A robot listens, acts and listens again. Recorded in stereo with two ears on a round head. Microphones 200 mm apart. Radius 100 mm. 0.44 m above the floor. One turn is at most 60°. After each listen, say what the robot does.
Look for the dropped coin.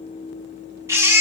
Keep listening.
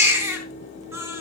Keep listening.
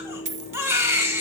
Turn 30° right.
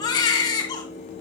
Keep listening.
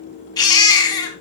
I heard a dropped coin, but can't make it out now. It was about straight ahead or 120° right.